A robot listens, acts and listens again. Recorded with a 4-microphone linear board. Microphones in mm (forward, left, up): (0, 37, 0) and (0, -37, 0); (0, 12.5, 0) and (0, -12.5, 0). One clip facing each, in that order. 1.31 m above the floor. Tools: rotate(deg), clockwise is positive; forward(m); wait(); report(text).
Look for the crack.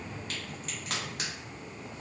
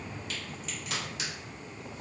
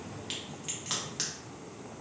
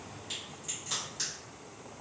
rotate(-45)
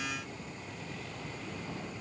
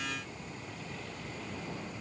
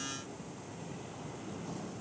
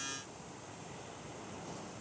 wait()
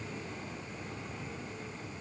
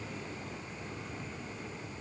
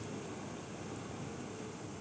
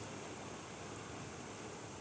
report("I heard a crack, but can't make it out now. It was about straight ahead or 90° left.")